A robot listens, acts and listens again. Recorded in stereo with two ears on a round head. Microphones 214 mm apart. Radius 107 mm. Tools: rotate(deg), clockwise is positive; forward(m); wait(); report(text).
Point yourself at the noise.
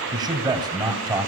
rotate(15)
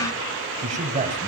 rotate(150)
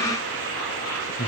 rotate(-25)
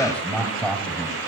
report("Found it: a man speaking, straight ahead.")